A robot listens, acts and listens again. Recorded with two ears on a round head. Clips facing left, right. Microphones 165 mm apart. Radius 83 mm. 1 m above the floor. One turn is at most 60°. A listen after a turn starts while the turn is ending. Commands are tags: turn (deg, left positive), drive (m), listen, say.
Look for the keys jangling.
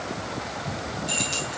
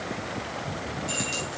<turn deg="-30"/>
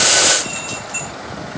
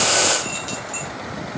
<turn deg="-60"/>
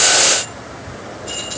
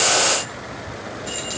<turn deg="-60"/>
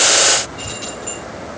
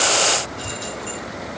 <turn deg="-10"/>
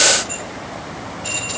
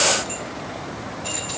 <say>Facing the keys jangling.</say>